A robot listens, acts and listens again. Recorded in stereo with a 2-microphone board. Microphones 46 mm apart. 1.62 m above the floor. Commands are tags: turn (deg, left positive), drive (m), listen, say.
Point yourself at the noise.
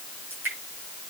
<turn deg="-50"/>
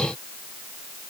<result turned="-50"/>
<listen/>
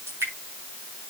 <turn deg="-80"/>
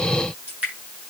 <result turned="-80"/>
<turn deg="-30"/>
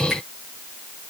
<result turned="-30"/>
<listen/>
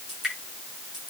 <turn deg="-10"/>
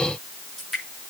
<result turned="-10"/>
<say>Facing the dripping.</say>